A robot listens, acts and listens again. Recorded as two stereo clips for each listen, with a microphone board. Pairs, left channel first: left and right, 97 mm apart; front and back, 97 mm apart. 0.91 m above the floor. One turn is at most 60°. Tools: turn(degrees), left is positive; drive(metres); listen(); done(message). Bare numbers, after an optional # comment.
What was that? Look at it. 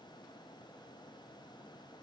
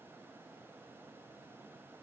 listen()
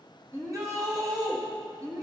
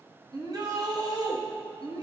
# The shout: 140° right.
turn(-60)
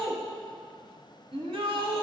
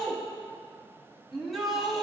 # The shout is now 95° right.
turn(-60)
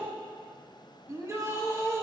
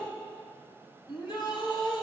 # The shout is now 30° right.
turn(-30)
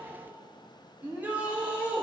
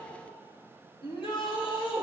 # The shout is now 15° right.
turn(-15)
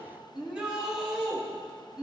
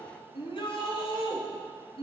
# The shout is now 10° right.
turn(-10)
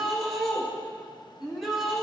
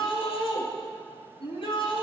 done("Facing the shout.")